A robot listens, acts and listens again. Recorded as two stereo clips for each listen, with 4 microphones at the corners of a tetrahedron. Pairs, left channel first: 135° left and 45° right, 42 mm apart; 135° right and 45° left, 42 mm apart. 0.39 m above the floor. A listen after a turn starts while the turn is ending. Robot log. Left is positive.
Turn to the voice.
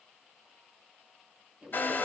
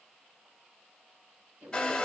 note: The woman speaking: 30° left.
cmd yaw +30
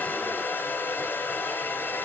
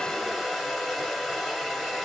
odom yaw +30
cmd idle
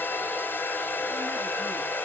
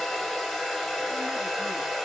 cmd idle
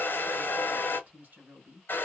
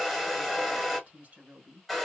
end: Found it: a woman speaking, straight ahead.